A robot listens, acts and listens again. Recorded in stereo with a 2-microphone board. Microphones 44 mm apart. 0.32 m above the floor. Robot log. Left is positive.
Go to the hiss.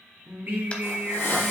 note: The hiss: about 65° left or 115° left.
cmd yaw +65
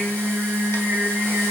cmd idle
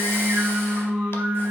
cmd idle
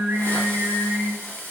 note: So it is at 50° left.
cmd yaw +50
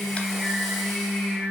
cmd idle
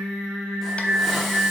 cmd idle
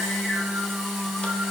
end: Facing where the hiss came from. I can't hear it now. I did not reach it.